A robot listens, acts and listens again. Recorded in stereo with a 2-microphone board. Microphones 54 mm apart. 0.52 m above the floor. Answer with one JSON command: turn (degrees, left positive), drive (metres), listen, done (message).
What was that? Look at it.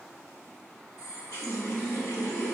{"turn": 70}
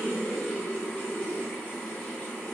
{"turn": 25}
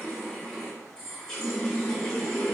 {"turn": 10}
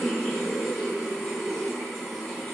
{"done": "Facing the running tap."}